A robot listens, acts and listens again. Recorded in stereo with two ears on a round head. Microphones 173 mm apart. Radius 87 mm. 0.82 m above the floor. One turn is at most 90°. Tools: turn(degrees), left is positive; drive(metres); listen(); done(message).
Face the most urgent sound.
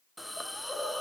listen()
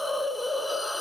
listen()
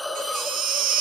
turn(degrees=-45)
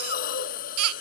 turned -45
turn(degrees=-90)
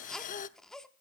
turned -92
done("Facing the baby crying, under 1 m away.")